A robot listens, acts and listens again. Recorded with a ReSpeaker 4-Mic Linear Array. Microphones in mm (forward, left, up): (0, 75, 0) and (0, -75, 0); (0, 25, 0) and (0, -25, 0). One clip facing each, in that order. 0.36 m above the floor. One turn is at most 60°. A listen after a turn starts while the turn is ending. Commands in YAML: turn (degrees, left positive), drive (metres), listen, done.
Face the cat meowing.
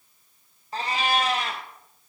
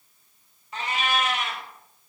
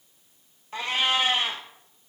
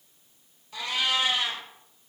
turn: 35
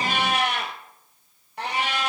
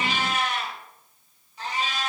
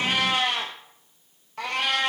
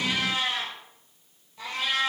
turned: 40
turn: 60
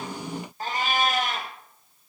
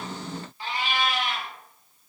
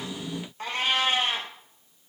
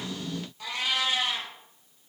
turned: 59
turn: 45
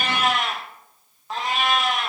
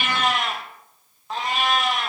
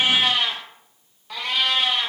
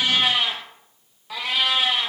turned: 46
done: "Facing the cat meowing, 1 to 2 m away."